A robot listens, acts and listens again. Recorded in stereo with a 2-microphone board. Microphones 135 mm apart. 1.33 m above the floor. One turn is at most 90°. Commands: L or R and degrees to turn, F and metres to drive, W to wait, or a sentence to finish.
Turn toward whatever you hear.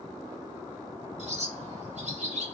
R60
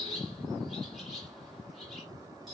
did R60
Facing the bird, 2 to 4 m away.